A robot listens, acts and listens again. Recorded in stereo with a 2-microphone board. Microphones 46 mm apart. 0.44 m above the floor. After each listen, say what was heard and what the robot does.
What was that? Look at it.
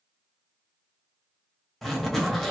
Turn 30° left.
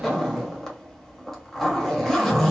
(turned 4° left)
Turn 30° left.
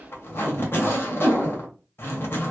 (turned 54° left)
So it is at 120° left. Turn 120° left.
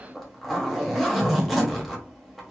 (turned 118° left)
Facing the zipper, 1 to 2 m away.